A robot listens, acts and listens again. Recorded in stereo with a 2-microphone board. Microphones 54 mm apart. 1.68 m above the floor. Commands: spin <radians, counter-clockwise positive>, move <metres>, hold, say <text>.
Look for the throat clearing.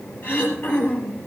spin 0.79
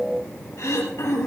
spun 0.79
spin 1.48
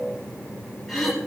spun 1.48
say Facing the throat clearing, over 4 m away.